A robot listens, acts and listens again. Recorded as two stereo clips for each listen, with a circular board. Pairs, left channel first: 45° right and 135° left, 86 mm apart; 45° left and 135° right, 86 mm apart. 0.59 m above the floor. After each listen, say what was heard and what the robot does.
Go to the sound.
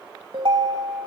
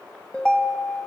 The ringtone: 125° left. Turn 125° left.
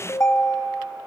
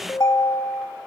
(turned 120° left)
Drive 1.0 m forward.
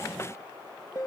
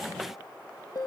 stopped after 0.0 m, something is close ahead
Blocked. The ringtone is further on, straight ahead.